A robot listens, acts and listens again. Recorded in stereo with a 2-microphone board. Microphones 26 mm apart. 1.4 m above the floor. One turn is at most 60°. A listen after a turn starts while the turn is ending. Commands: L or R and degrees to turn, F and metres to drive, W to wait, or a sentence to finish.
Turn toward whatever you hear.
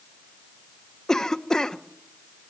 L20
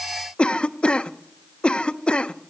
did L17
L60
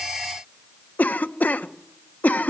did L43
L60
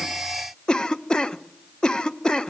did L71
L30
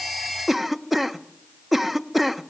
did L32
Facing the cough, 1 to 2 m away.